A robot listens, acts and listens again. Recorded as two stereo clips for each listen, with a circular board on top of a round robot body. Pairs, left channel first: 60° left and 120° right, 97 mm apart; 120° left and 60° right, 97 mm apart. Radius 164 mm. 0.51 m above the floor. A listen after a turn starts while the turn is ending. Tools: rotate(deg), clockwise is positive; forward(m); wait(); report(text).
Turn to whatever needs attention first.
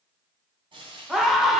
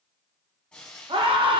rotate(35)
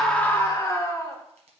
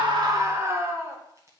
report("Facing the scream, 1 to 2 m away.")